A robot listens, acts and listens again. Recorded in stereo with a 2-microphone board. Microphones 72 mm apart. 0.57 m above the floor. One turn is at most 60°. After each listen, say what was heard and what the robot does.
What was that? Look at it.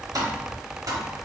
The tapping: about 55° right or 125° right. Turn 55° right.
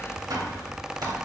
So it is at 65° right. Turn 60° right.
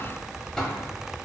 Facing the tapping, under 1 m away.